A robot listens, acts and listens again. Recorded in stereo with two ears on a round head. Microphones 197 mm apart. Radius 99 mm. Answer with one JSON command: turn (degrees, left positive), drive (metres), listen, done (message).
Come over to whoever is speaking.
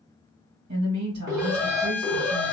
{"turn": -90}
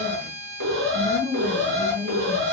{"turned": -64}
{"turn": -35}
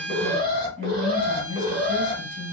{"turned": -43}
{"drive": 1.0}
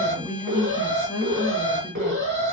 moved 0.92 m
{"turn": 15}
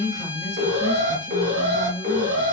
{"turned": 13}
{"drive": 1.0}
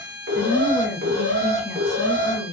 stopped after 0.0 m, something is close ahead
{"done": "I am next to the woman speaking."}